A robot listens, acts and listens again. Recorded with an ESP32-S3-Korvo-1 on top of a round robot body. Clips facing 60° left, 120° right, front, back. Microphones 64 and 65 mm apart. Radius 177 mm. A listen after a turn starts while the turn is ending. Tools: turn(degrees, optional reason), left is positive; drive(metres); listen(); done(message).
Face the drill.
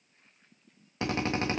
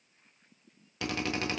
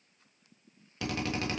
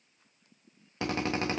turn(degrees=120, reason="The drill: 120° left.")
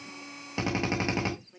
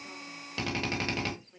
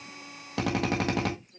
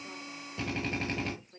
turn(degrees=-10, reason="The drill is now 10° right.")
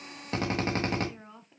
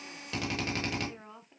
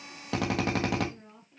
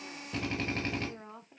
done("Facing the drill, 1 to 2 m away.")